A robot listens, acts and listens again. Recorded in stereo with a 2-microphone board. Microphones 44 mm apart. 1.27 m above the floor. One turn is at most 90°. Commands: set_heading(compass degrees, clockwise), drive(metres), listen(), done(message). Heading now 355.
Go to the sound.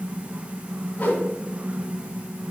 set_heading(315)
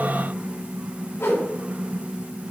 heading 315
set_heading(225)
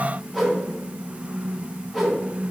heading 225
drive(1.0)
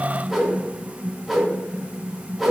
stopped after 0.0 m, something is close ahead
done("Something is in my way. I am facing the whoosh but have not reached it.")